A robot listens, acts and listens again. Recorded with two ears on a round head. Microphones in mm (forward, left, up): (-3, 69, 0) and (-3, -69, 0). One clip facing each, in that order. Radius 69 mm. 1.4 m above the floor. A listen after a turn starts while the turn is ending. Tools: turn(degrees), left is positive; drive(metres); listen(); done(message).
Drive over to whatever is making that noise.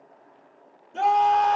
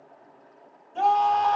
turn(degrees=90)
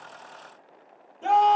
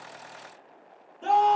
turn(degrees=10)
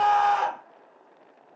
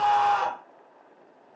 drive(metres=1.0)
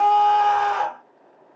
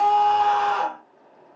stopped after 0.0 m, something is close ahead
done("Something is in my way. I am facing the scream but have not reached it.")